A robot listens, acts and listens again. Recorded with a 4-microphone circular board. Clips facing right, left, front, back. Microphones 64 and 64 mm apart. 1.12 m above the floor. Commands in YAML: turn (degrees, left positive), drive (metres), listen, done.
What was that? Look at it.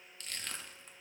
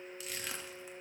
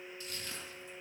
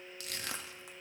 turn: 170
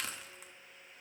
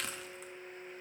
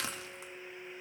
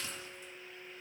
done: "Facing the crushing, 1 to 2 m away."